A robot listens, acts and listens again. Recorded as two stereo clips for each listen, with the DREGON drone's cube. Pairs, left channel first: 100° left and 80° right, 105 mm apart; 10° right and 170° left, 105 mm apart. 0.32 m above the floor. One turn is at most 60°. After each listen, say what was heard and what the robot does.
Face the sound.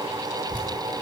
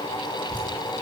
The dripping: 155° right. Turn 60° right.
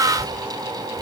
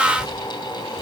The dripping is now 75° right. Turn 60° right.
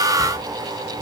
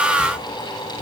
The dripping is now 20° right. Turn 20° right.
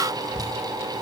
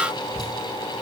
Facing the dripping.